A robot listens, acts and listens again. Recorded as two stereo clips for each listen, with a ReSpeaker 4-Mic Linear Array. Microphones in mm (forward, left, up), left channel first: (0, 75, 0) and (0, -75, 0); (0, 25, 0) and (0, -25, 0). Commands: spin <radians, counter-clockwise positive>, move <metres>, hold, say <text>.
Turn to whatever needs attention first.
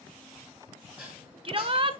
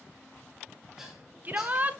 spin -0.61
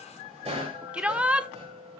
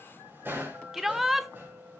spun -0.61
spin -0.17
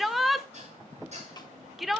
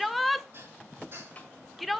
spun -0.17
say Facing the shout, 1 to 2 m away.